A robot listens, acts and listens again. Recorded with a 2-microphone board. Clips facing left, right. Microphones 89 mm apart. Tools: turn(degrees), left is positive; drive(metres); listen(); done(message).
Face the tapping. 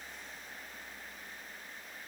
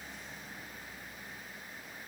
listen()
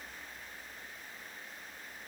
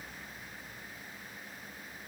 listen()
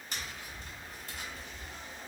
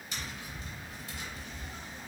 turn(degrees=45)
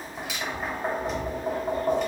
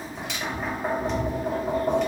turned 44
done("Facing the tapping, 1 to 2 m away.")